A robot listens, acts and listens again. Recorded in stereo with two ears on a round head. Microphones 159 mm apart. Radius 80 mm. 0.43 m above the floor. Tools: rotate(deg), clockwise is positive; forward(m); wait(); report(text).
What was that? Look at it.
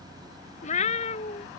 rotate(-35)
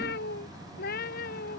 rotate(-120)
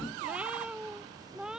report("Found it: a cat meowing, straight ahead.")